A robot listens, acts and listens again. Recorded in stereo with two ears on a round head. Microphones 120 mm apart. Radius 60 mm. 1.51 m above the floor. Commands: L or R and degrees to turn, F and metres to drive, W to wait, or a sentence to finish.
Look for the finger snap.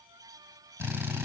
W
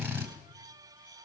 W
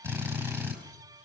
I can't make out a finger snap to turn to.